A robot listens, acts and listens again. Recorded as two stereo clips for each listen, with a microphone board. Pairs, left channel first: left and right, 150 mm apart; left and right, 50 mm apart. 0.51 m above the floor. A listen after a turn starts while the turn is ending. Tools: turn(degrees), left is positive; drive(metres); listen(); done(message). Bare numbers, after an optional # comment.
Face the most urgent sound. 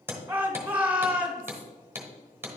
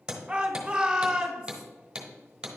turn(-30)
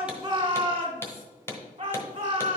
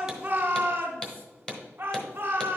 # So it is at 135° right.
turn(-135)
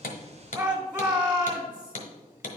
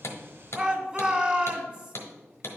# The shout is now 30° right.
turn(-30)
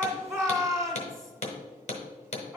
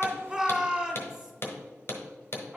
# The shout is now 25° right.
turn(-25)
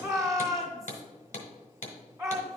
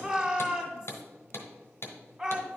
# The shout is now 25° right.
turn(-25)
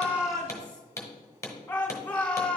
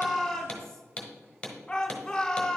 # The shout is now 10° left.
turn(10)
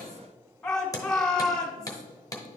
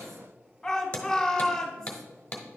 done("Found it: a shout, straight ahead, 1 to 2 m away.")